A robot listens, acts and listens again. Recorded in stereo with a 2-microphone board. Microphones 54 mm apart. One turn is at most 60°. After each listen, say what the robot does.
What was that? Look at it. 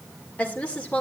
Turn 20° left.
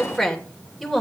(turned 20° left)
Found it: a woman speaking, straight ahead.